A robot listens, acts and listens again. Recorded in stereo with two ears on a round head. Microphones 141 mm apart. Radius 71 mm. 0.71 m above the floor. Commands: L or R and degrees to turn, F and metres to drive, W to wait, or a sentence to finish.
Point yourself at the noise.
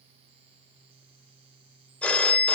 L30
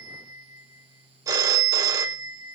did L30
R25
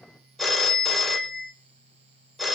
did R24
Facing the phone ringing, 1 to 2 m away.